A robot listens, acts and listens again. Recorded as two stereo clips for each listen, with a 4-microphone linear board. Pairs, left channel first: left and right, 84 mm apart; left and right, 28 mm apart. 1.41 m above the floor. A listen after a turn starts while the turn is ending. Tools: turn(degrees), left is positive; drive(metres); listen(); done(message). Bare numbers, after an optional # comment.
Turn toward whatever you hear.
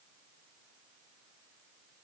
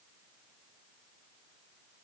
listen()
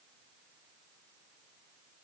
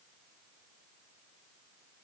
listen()
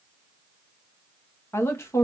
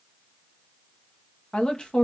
# The woman speaking: about 35° left or 145° left.
turn(35)
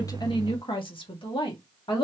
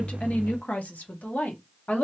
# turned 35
# So it is at 95° left.
turn(95)
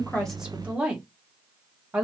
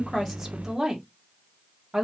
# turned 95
# The woman speaking is now 15° right.
turn(-15)
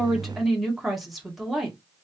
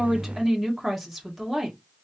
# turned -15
done("Found it: a woman speaking, straight ahead.")